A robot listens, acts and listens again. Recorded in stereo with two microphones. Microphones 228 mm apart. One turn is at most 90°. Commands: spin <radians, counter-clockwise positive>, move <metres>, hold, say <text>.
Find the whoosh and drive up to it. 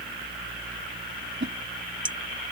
spin -1.05
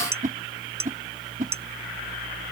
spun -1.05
spin -0.79
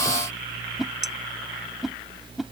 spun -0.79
move 1.0
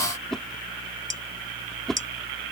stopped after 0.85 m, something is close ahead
say I am next to the whoosh.